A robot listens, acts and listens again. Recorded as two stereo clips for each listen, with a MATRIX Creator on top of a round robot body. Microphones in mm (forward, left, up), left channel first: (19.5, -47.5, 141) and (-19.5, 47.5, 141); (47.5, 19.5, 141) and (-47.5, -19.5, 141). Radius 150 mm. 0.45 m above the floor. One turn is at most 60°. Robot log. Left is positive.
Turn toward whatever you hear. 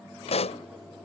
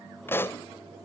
note: The pop: 45° right.
cmd yaw -45
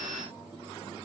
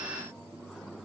end: I heard a pop from this way, but can't make it out now.